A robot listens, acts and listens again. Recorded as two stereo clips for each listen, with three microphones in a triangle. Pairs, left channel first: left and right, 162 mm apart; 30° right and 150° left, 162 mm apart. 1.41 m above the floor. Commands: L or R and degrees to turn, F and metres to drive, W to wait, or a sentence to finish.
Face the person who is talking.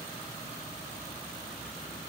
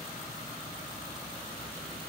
W
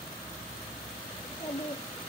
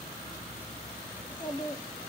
L30
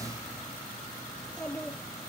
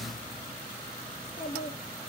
Facing the child speaking, 2 to 4 m away.